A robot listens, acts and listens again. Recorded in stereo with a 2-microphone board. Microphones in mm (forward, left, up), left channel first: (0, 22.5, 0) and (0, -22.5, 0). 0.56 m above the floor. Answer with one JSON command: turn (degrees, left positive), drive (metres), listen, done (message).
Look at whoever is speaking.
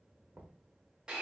{"listen": true}
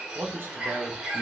{"turn": -55}
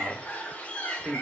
{"turn": -40}
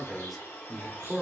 {"done": "Found it: a man speaking, straight ahead, 1 to 2 m away."}